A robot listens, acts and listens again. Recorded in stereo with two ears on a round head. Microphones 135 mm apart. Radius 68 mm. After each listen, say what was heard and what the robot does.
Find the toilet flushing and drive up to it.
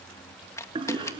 The toilet flushing: about 35° right or 145° right. Turn 35° right.
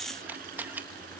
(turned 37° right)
Keep listening.
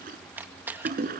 So it is at 105° right. Turn 105° right.
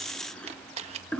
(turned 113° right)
Drive 1.0 m forward.
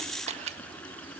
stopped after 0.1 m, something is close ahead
The toilet flushing is now 10° left. Turn 10° left.
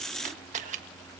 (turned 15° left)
Keep listening.
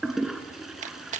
Blocked. The toilet flushing is further on, straight ahead.